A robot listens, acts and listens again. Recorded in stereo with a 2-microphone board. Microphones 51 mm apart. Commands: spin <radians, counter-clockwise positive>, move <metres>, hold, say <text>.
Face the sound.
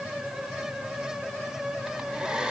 spin -0.35
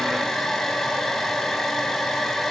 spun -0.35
say Facing the hair dryer, 2 to 4 m away.